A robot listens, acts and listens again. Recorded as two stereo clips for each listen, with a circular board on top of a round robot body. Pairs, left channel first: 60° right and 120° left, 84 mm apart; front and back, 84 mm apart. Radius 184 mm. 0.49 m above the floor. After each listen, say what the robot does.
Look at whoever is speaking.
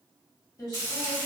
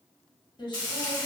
Turn 15° right.
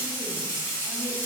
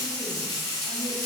Keep listening.
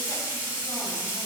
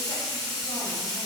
Keep listening.
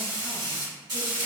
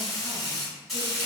I heard a woman speaking from this way, but can't make it out now.